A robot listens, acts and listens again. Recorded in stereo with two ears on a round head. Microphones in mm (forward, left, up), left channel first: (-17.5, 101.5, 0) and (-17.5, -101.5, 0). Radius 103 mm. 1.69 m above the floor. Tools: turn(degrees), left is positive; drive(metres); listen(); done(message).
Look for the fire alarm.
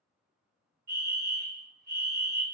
turn(degrees=-45)
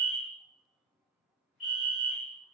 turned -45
done("Found it: a fire alarm, straight ahead, 1 to 2 m away.")